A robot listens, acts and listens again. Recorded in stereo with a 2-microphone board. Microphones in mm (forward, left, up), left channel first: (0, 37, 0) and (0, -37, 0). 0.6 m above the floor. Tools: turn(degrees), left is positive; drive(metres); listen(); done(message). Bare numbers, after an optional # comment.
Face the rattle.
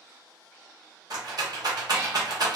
# The rattle: about 55° right or 125° right.
turn(-55)
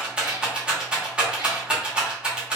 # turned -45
# So it is at 15° right.
turn(-15)
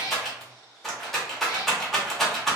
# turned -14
done("Found it: a rattle, straight ahead, under 1 m away.")